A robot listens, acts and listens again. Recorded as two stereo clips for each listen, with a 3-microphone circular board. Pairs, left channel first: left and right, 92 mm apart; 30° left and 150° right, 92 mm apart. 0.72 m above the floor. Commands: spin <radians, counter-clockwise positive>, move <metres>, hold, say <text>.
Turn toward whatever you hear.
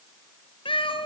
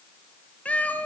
spin 1.75
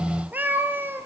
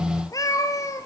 spin -0.44
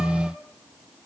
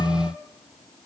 hold
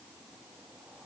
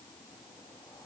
hold
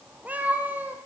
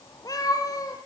spin -0.35
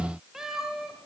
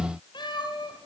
say Facing the cat meowing, 2 to 4 m away.